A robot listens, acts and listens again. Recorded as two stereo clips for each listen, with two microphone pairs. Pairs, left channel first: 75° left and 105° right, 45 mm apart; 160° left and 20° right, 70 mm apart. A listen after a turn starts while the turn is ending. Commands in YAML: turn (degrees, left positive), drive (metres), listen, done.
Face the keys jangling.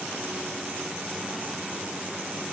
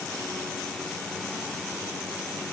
listen: true
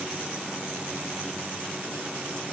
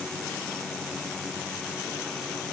listen: true
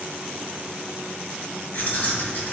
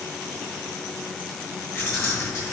turn: 120
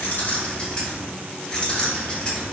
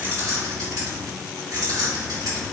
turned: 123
done: "Facing the keys jangling."